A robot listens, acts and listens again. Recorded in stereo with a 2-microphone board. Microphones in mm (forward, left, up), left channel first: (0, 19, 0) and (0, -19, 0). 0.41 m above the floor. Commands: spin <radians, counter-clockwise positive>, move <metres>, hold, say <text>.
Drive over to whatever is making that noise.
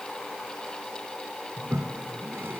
spin -1.22
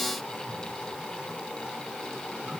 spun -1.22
spin -0.44
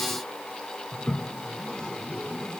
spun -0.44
spin 0.35
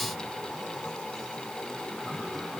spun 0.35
move 1.0
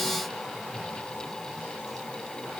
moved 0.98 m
move 1.0
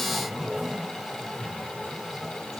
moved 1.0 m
move 1.0
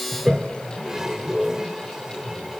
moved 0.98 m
spin -0.35
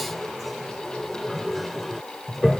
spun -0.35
move 1.0
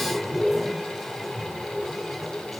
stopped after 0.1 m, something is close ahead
say Arrived at the toilet flushing, straight ahead.